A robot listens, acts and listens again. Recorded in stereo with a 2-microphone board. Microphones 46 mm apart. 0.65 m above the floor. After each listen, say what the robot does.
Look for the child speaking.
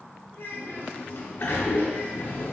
Turn 55° left.
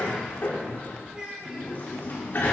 Turn 20° right.
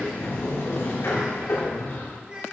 Turn 25° right.
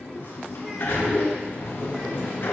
Keep listening.
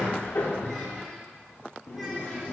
Keep listening.
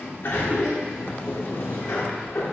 Facing where the child speaking came from. I can't hear it now.